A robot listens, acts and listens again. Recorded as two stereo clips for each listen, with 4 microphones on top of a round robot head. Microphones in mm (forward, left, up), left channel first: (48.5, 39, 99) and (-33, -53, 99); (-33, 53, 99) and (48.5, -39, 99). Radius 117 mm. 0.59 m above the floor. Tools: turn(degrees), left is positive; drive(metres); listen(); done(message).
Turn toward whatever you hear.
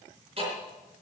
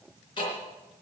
turn(degrees=-175)
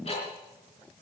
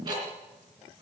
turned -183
turn(degrees=10)
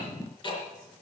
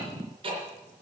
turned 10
done("Found it: ticking, straight ahead, 2 to 4 m away.")